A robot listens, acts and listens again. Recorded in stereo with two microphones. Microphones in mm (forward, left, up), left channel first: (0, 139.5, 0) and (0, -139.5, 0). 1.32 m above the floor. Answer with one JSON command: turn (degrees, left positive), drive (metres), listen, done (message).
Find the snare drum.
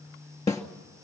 {"turn": 30}
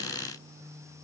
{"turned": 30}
{"listen": true}
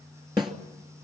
{"turn": -15}
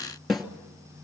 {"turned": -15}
{"done": "Found it: a snare drum, straight ahead, 2 to 4 m away."}